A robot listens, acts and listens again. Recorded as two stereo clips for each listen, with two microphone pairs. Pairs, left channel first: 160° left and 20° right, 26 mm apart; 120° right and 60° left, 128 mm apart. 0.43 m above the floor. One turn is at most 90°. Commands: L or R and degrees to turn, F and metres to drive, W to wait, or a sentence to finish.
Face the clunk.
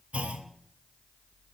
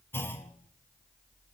R50
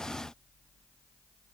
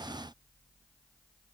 Facing where the clunk came from. I can't hear it now.